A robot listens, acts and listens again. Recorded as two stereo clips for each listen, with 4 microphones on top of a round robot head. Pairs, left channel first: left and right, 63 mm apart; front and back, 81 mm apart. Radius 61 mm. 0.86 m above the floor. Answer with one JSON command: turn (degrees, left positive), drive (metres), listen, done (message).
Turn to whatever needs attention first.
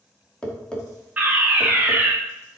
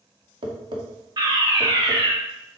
{"turn": -155}
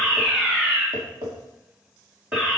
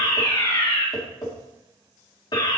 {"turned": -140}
{"turn": -15}
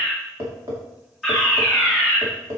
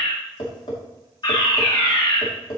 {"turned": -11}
{"done": "Facing the fire alarm, 2 to 4 m away."}